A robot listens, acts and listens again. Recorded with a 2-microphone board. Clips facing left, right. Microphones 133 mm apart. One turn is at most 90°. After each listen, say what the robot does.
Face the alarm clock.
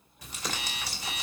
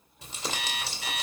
Turn 75° right.
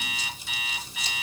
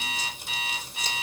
Turn 35° right.
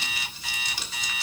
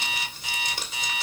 Turn 20° right.
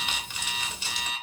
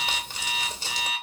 Facing the alarm clock, 2 to 4 m away.